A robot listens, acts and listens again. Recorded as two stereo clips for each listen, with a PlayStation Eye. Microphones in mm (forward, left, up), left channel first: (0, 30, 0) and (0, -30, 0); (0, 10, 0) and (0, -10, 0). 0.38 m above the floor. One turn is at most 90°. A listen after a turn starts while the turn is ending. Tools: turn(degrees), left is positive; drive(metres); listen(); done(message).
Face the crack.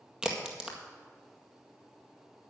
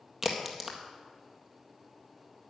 turn(degrees=-30)
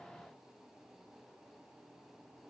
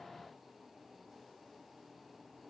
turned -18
listen()
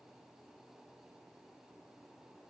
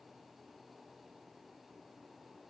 done("I heard a crack, but can't make it out now. It was about 5° left or 150° right.")